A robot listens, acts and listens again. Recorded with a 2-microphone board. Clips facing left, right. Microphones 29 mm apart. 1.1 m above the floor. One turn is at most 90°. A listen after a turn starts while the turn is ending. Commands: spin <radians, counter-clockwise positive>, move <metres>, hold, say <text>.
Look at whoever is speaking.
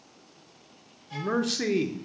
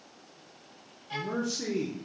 spin 1.22
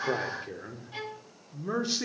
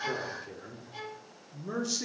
spin 0.52
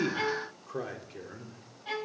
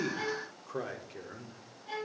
say Facing the man speaking.